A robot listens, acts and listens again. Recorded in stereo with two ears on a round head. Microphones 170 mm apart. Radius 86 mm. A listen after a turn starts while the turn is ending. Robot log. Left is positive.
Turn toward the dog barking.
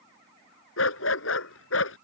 cmd yaw +90
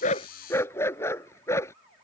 note: So it is at 15° left.
cmd yaw +15
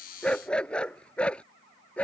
end: Found it: a dog barking, straight ahead.